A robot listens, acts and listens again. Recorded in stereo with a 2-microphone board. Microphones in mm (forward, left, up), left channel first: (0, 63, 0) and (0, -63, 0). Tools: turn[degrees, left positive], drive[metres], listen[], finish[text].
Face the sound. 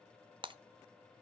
Thought: The breaking glass: about 40° right or 140° right.
Action: turn[-40]
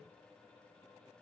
Action: listen[]
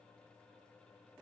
Action: finish[I heard breaking glass, but can't make it out now. It was about straight ahead or 100° right.]